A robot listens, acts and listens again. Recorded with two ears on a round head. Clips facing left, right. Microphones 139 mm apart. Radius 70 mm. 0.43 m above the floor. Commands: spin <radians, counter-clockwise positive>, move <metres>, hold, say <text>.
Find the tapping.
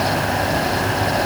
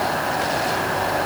hold
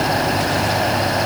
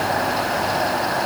hold
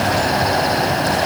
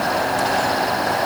say I can't make out tapping.